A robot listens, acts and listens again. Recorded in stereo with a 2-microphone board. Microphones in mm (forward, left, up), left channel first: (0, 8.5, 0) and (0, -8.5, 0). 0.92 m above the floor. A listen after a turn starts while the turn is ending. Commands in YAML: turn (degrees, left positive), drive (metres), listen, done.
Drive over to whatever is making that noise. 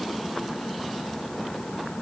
listen: true
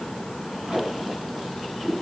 turn: -90
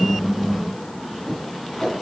turn: 10
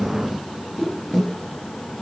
drive: 1.0
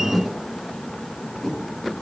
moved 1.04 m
drive: 1.0
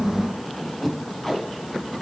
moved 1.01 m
drive: 1.0
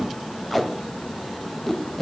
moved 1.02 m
turn: 10
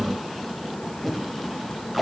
drive: 1.0
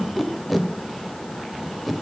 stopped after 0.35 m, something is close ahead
done: "Arrived at the tape being pulled, straight ahead."